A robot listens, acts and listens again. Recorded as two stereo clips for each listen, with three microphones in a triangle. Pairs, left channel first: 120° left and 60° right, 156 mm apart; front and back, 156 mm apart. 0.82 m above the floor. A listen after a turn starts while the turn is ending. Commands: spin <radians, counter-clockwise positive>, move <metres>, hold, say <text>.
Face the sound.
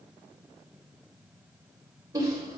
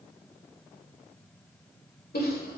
say Facing the giggle.